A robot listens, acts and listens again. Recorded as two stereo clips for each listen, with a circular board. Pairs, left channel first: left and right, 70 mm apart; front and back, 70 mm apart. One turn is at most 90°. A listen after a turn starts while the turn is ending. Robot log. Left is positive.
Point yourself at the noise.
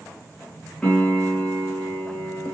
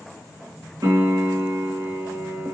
note: The piano: 160° left.
cmd yaw +90
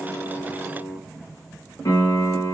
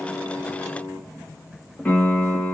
note: The piano is now 70° left.
cmd yaw +70
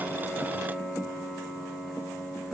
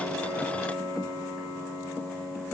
note: The piano is now 10° right.
cmd yaw -10
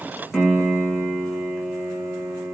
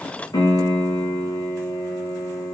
end: Found it: a piano, straight ahead, 2 to 4 m away.